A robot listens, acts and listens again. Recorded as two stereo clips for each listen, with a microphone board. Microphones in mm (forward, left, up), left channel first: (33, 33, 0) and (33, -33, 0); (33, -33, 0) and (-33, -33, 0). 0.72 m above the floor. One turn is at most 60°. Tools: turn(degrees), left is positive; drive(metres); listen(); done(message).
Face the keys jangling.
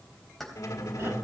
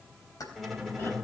done("Found it: keys jangling, straight ahead.")